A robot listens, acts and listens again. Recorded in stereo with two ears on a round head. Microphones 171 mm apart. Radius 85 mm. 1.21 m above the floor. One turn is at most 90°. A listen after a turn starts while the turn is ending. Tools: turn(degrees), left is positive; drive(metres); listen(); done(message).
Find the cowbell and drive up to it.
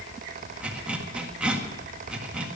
listen()
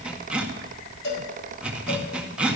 turn(degrees=55)
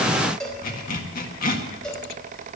drive(metres=1.0)
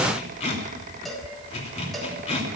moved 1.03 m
drive(metres=1.0)
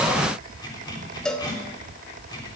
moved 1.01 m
drive(metres=1.0)
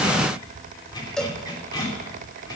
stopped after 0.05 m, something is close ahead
done("Arrived at the cowbell, straight ahead.")